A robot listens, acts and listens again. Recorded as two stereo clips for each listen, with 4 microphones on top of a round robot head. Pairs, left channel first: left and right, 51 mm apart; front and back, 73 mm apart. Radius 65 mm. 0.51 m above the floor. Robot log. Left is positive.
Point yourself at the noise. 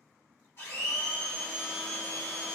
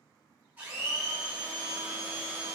note: The blender: 115° left.
cmd yaw +115
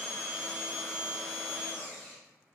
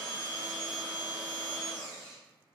end: Facing the blender.